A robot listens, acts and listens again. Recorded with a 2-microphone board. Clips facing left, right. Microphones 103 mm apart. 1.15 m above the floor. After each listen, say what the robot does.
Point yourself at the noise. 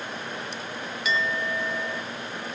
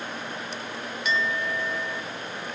Turn 30° left.
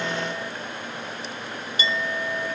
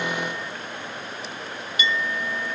Turn 150° left.
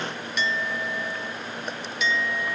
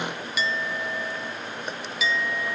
Found it: a clink, straight ahead.